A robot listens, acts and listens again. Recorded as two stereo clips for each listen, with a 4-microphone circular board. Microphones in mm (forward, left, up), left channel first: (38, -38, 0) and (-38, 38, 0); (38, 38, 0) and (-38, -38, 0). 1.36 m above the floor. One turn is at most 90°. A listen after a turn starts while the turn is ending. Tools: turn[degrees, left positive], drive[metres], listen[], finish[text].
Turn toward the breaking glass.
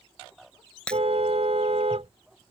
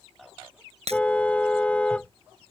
Thought: The breaking glass: 125° right.
Action: turn[-90]
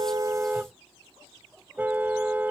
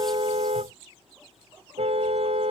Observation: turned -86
Thought: Nothing new. It was at 40° right.
Action: turn[-40]
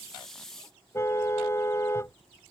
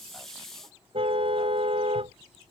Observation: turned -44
Action: finish[I heard breaking glass from this way, but can't make it out now.]